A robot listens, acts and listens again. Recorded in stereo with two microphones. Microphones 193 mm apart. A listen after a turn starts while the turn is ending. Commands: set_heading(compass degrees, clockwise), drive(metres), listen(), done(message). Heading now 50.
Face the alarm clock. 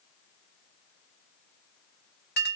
listen()
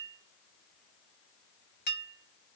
listen()
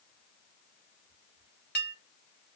done("I can't make out an alarm clock, only a clink.")